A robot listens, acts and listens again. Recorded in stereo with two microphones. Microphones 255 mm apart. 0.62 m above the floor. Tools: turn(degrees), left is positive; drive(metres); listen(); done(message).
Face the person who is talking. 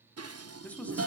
turn(degrees=30)
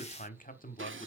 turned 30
turn(degrees=145)
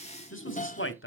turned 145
turn(degrees=60)
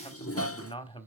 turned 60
turn(degrees=20)
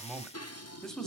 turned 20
done("Found it: a man speaking, straight ahead.")